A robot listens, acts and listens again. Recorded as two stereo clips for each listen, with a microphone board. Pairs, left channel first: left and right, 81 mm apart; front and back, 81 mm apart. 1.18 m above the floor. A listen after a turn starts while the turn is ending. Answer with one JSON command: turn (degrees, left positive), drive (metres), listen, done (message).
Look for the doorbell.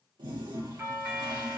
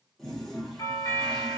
{"turn": -35}
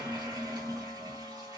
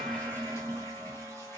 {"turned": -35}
{"listen": true}
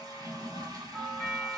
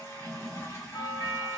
{"done": "Found it: a doorbell, straight ahead."}